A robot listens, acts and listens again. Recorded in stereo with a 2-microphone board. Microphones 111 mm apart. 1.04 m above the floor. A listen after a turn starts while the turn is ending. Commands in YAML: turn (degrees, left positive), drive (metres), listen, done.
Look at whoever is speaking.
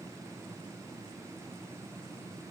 listen: true
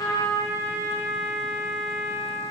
listen: true
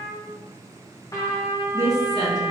turn: -35
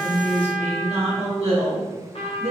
turn: -115
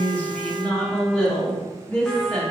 turn: 10
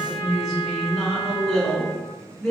done: "Facing the woman speaking."